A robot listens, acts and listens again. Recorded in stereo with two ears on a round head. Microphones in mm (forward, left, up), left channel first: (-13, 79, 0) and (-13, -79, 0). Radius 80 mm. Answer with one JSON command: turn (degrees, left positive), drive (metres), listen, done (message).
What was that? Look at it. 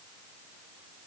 {"listen": true}
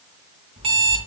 {"turn": -30}
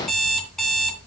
{"done": "Found it: an alarm clock, straight ahead, 2 to 4 m away."}